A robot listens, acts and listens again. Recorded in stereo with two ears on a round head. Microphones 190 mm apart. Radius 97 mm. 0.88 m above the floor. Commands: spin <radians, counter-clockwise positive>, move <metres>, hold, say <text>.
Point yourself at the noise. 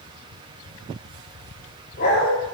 spin 0.87
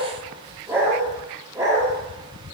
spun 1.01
spin -0.26
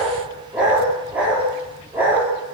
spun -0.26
spin -0.17
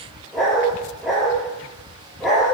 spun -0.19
say Facing the dog barking, over 4 m away.